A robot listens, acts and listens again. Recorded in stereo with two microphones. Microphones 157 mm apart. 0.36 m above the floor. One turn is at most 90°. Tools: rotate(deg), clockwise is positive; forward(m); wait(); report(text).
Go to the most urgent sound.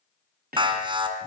rotate(30)
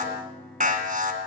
rotate(90)
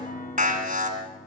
rotate(60)
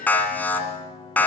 rotate(-10)
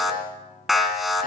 forward(1.0)
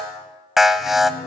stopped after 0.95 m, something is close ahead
report("I am next to the alarm.")